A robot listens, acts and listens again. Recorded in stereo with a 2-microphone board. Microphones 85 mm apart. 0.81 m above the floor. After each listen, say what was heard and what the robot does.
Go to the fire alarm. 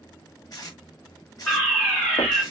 Turn 30° left.
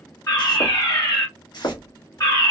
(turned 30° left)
So it is at 135° left. Turn 135° left.
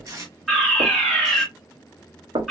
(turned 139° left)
Drive 1.0 m forward.
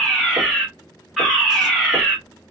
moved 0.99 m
Drive 1.0 m forward.
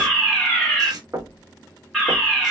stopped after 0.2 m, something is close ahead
Arrived at the fire alarm, straight ahead.